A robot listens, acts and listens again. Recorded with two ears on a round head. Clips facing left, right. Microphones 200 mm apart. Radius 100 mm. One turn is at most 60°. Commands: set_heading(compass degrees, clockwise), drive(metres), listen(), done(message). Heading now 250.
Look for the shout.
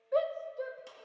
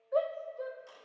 set_heading(215)
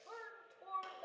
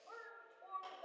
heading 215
set_heading(155)
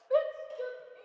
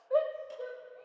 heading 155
set_heading(110)
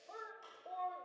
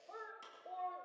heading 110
done("Facing the shout.")